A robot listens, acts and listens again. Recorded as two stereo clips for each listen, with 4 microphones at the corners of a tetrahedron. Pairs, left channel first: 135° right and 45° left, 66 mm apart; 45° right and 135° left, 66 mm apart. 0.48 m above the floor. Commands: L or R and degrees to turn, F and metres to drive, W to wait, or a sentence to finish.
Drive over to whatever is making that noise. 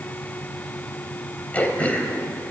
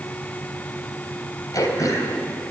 R70
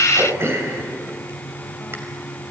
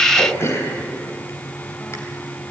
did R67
F1.0
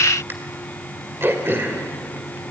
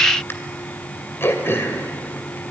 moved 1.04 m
F1.0
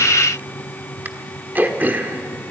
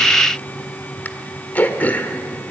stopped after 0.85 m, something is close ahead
I am next to the throat clearing.